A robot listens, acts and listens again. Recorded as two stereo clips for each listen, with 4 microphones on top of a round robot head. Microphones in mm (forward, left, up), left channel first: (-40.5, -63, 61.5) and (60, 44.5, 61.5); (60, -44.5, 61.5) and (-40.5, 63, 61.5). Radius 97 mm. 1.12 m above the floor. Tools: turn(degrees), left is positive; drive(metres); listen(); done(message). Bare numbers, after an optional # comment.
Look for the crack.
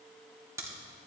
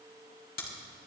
# The crack: 25° right.
turn(-25)
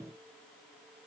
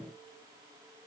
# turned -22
done("Facing where the crack came from. I can't hear it now.")